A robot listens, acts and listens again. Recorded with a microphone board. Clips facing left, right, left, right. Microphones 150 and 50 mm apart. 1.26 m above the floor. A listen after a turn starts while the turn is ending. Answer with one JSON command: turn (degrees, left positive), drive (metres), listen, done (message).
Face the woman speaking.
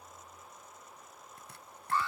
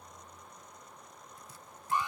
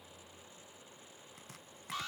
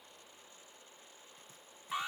{"listen": true}
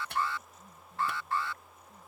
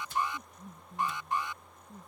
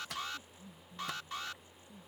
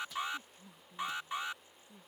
{"turn": -65}
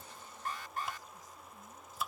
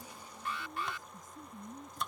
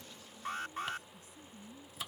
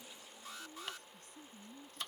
{"turn": -50}
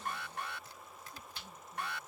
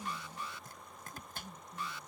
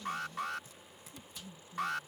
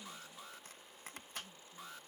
{"done": "Facing the woman speaking."}